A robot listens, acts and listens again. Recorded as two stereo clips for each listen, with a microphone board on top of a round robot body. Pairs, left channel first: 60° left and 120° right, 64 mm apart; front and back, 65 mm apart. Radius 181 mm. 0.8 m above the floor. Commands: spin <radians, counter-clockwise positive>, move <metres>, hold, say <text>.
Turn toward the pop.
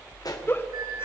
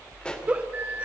spin 1.31
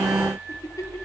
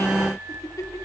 say I heard a pop from this way, but can't make it out now.